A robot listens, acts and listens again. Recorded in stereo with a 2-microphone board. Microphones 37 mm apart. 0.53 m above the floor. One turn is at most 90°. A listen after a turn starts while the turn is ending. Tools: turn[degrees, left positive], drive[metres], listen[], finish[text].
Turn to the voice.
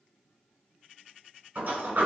Action: listen[]
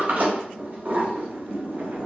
Action: listen[]
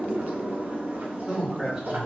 Action: turn[-30]
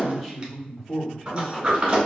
Thought: So it is at 15° left.
Action: turn[15]
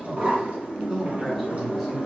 Action: finish[Found it: a man speaking, straight ahead, 1 to 2 m away.]